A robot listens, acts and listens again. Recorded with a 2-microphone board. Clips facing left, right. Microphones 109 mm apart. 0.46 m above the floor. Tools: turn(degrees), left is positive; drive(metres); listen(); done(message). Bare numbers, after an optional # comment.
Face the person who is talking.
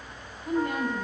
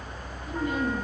# The woman speaking: about 60° left or 120° left.
turn(60)
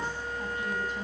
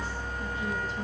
listen()
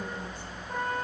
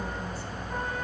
listen()
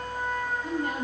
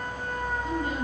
# So it is at 55° left.
turn(55)
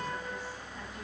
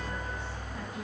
listen()
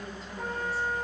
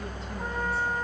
listen()
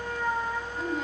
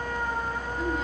done("I heard a woman speaking from this way, but can't make it out now.")